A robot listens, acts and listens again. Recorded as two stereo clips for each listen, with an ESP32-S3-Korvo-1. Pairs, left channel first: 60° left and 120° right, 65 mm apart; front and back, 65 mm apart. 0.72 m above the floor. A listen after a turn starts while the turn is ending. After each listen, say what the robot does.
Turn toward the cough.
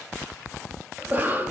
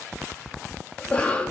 Turn 70° right.
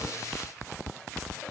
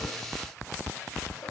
Keep listening.
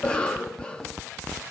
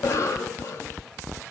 Turn 10° right.
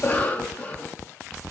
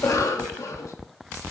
Facing the cough, under 1 m away.